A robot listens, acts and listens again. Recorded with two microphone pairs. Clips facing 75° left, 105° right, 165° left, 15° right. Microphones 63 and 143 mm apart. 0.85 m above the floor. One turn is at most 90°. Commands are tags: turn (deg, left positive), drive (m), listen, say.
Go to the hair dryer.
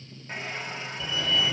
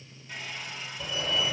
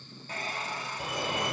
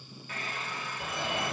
<turn deg="90"/>
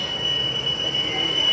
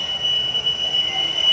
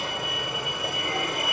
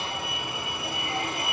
<turn deg="30"/>
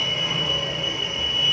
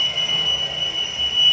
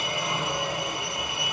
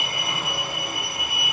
<listen/>
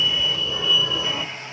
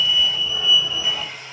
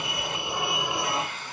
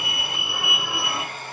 <turn deg="15"/>
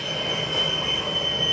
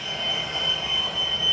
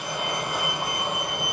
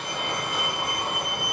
<listen/>
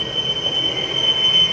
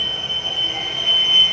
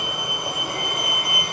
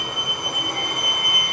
<listen/>
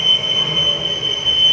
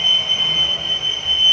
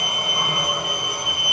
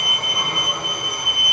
<say>I heard a hair dryer from this way, but can't make it out now. I did not reach it.</say>